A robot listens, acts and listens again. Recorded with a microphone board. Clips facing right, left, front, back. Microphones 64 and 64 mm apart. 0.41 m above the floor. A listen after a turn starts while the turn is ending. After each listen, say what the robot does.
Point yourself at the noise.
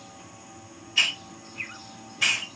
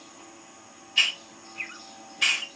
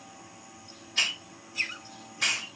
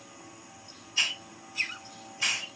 Facing the hiss.